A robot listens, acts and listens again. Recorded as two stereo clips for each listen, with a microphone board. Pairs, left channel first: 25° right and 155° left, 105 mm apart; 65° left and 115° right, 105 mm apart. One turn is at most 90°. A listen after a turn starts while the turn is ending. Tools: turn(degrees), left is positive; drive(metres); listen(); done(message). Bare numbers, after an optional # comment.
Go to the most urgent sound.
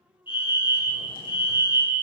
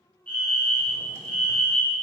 drive(1.0)
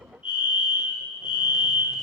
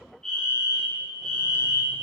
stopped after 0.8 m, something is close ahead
# The fire alarm is now 15° right.
turn(-15)
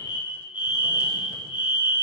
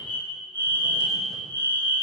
done("Something is in my way. I am facing the fire alarm but have not reached it.")